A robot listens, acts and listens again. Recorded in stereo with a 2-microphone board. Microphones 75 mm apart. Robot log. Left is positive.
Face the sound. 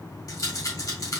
note: The rattle: about 55° left or 125° left.
cmd yaw +55
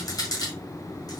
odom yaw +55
note: So it is at 60° left.
cmd yaw +60
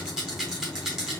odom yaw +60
note: The rattle is now 10° right.
cmd yaw -10
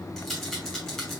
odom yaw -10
end: Facing the rattle, 1 to 2 m away.